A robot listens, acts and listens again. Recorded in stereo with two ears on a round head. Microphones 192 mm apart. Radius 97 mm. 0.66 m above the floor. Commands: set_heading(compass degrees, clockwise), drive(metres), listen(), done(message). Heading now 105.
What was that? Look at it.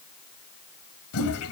set_heading(15)
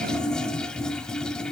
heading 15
done("Facing the toilet flushing.")